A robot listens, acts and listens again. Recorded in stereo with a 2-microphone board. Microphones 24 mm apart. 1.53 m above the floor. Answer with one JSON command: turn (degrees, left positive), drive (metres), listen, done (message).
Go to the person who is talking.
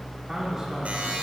{"turn": -15}
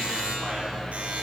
{"listen": true}
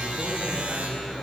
{"listen": true}
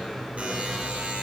{"done": "I heard a man speaking, but can't make it out now. It was about straight ahead or 150° right. I did not reach it."}